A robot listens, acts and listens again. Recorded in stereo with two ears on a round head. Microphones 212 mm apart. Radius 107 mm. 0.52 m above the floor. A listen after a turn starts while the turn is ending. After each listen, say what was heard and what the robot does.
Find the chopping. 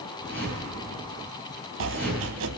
The chopping: about 60° right or 120° right. Turn 60° right.
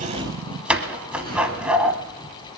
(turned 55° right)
Facing the chopping, under 1 m away.